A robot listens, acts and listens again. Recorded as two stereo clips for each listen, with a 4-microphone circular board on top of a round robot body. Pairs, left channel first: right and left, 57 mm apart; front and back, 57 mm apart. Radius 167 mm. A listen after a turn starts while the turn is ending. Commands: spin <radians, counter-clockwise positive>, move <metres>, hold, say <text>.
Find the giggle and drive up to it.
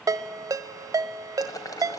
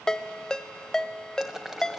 hold
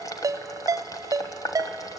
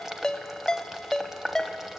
hold
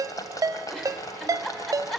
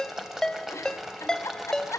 spin -0.17
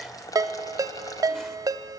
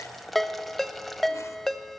hold
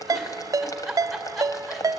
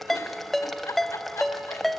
move 1.0
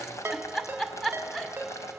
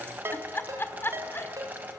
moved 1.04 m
spin -0.17
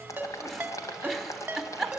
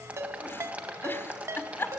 move 1.0
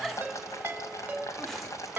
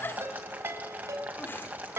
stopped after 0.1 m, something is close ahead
say Arrived at the giggle, straight ahead.